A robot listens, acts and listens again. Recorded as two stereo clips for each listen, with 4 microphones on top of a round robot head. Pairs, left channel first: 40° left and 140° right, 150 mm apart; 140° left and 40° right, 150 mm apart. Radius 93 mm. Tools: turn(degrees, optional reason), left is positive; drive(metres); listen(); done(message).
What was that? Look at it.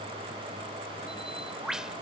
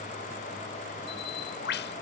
turn(degrees=135, reason="The bird: 135° left.")
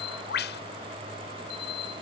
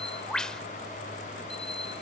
turn(degrees=55, reason="The bird is now 55° left.")
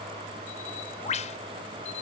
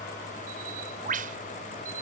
done("Found it: a bird, straight ahead.")